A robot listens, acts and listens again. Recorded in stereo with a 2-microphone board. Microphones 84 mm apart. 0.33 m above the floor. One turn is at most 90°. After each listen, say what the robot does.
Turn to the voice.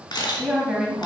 Turn 30° right.
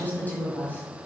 Turn 25° left.
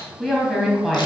Found it: a woman speaking, straight ahead.